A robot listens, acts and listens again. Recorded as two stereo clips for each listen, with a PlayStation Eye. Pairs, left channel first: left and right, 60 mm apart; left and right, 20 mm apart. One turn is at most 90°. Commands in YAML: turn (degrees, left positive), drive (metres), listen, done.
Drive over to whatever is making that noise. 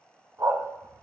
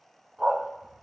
turn: -65
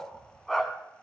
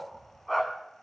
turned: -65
drive: 1.0
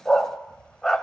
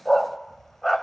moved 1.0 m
turn: 10
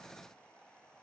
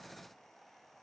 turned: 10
listen: true
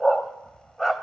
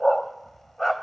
drive: 1.0
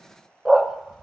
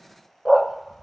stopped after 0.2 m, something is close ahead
done: "Arrived at the dog barking, straight ahead."